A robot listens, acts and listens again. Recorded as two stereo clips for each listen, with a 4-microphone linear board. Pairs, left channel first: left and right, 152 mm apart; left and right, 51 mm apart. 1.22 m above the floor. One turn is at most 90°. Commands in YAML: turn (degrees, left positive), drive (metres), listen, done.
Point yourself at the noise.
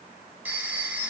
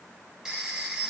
turn: -30
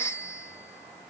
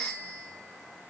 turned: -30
turn: 15
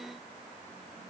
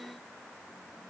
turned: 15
listen: true
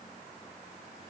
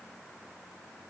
listen: true
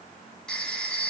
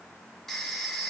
done: "Facing the phone ringing."